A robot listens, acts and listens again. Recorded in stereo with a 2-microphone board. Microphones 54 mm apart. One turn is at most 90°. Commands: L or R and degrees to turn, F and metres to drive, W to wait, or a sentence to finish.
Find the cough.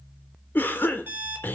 L40
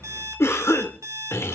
L90
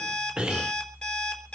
R20
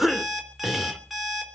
Facing the cough.